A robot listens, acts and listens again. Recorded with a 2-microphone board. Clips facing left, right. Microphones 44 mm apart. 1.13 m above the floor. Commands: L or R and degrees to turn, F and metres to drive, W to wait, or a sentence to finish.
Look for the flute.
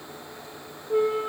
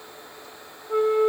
R60
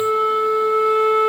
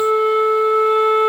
R50
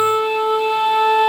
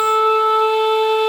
Facing the flute.